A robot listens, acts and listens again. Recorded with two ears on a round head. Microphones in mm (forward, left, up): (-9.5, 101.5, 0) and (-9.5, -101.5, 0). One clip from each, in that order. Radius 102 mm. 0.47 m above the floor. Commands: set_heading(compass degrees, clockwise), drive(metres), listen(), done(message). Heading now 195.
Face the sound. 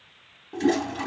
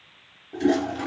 set_heading(180)
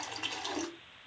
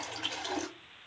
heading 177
done("Found it: a toilet flushing, straight ahead, under 1 m away.")